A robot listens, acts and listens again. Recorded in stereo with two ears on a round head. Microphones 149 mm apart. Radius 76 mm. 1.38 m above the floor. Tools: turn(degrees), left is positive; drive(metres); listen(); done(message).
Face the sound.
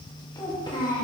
turn(degrees=30)
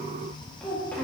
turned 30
turn(degrees=10)
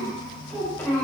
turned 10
turn(degrees=10)
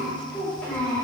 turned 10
turn(degrees=10)
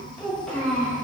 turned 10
turn(degrees=10)
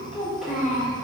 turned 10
done("Found it: a child speaking, straight ahead.")